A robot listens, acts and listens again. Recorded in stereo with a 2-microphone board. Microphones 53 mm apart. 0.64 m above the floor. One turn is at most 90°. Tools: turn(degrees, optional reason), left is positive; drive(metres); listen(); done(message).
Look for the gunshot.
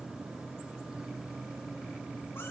listen()
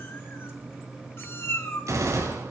turn(degrees=-90)
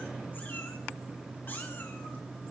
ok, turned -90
done("I heard a gunshot from this way, but can't make it out now.")